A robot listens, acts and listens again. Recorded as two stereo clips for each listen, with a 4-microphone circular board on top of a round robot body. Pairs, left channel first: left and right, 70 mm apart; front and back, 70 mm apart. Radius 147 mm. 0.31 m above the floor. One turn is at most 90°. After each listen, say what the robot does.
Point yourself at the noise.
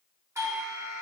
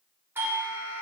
Turn 90° right.
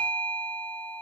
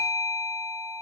Turn 35° right.
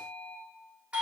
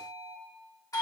Turn 20° right.
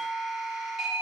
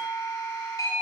Found it: a doorbell, straight ahead.